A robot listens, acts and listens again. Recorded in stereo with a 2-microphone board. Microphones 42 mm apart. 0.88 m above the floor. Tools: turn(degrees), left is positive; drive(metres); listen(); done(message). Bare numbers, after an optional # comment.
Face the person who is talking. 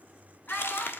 # The child speaking: about 35° left or 145° left.
turn(35)
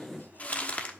listen()
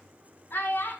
# So it is at 115° left.
turn(115)
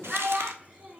# The child speaking is now 15° right.
turn(-15)
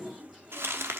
listen()
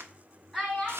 done("Facing the child speaking, 2 to 4 m away.")